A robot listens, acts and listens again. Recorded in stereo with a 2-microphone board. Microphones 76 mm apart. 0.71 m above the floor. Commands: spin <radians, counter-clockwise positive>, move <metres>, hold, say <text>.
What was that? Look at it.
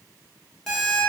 spin 0.52
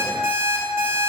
spin -0.44
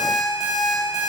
say Found it: an alarm clock, straight ahead, under 1 m away.